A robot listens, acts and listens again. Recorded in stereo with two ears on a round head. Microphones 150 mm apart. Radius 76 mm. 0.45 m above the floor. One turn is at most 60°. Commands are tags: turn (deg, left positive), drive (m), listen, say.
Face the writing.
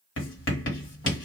<turn deg="60"/>
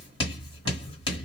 <turn deg="30"/>
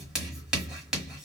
<say>Found it: writing, straight ahead, 1 to 2 m away.</say>